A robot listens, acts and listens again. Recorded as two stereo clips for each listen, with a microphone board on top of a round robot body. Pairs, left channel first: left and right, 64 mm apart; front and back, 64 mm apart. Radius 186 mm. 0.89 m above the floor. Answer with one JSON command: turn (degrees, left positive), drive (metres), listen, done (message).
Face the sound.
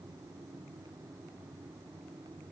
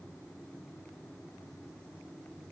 {"listen": true}
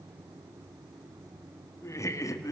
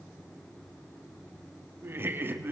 {"turn": 120}
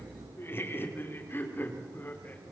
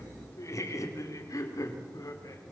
{"turn": 30}
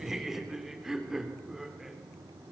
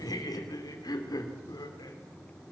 {"done": "Found it: laughter, straight ahead, 2 to 4 m away."}